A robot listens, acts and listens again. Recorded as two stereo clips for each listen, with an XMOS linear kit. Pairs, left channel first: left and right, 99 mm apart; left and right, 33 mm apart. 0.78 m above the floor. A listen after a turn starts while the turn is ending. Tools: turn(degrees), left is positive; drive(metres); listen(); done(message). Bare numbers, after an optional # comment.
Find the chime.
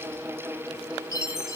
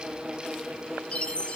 # The chime: about 30° left or 150° left.
turn(30)
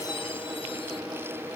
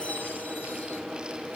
listen()
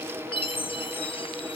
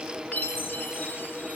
# So it is at 125° left.
turn(125)
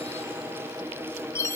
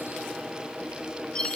# The chime is now 30° left.
turn(30)
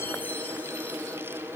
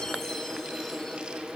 listen()
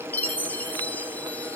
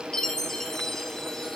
# The chime is now 15° left.
turn(15)
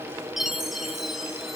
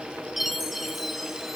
done("Found it: a chime, straight ahead, under 1 m away.")